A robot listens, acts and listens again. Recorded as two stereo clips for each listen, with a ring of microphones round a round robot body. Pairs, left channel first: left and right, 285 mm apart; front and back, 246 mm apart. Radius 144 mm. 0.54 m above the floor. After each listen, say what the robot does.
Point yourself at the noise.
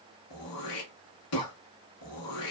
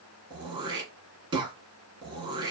Turn 110° left.
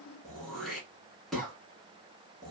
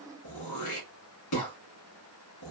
Facing the throat clearing.